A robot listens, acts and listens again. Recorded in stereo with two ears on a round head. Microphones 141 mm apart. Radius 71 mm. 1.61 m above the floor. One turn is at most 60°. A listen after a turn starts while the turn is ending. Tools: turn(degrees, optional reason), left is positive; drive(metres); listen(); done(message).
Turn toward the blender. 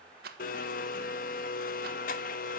turn(degrees=55, reason="The blender: about 55° left or 125° left.")
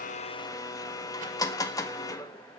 turn(degrees=25, reason="So it is at 25° left.")
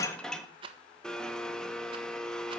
done("Found it: a blender, straight ahead, 1 to 2 m away.")